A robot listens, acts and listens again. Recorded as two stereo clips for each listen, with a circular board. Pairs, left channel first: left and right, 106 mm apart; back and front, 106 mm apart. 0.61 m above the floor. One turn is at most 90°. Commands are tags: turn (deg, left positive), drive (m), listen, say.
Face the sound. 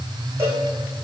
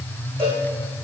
<turn deg="-25"/>
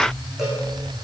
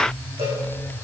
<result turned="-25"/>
<listen/>
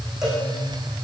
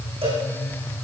<say>Found it: a cowbell, straight ahead.</say>